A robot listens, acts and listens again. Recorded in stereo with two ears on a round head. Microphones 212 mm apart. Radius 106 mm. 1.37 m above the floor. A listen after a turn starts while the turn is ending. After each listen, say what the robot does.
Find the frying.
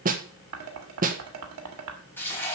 Turn 30° left.
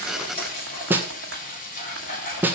Turn 140° left.
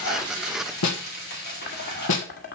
Turn 45° left.
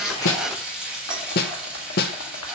Facing the frying.